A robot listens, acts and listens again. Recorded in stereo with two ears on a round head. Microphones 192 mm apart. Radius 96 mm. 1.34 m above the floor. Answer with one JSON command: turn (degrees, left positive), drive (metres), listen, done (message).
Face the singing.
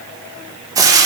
{"listen": true}
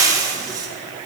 {"listen": true}
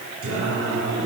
{"turn": -90}
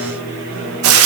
{"done": "Facing the singing."}